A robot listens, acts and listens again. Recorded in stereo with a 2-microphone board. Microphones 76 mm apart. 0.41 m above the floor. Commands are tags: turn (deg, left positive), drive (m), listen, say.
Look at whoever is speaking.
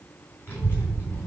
<turn deg="35"/>
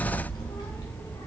<turn deg="105"/>
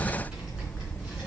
<turn deg="-15"/>
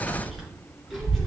<say>Found it: a child speaking, straight ahead, over 4 m away.</say>